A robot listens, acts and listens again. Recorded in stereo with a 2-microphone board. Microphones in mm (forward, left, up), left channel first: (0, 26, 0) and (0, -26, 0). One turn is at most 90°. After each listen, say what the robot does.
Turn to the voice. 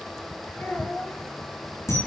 Turn 40° left.
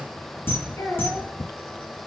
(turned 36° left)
Turn 90° left.
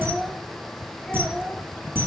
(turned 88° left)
Turn 15° left.
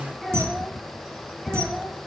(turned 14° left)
Facing the child speaking.